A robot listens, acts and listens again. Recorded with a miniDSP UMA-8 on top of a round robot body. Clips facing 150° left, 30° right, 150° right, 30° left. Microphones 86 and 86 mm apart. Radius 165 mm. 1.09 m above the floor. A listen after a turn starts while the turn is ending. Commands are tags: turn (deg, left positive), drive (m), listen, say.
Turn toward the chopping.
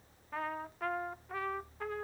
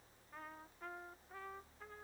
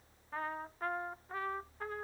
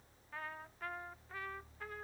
<listen/>
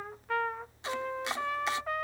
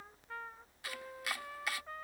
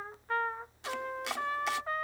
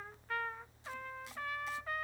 <turn deg="-145"/>
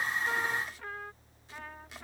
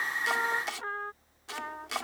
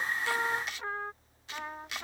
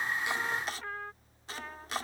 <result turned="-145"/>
<turn deg="-20"/>
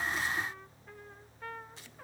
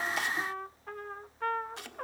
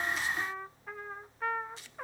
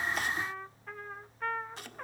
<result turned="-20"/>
<say>Facing the chopping.</say>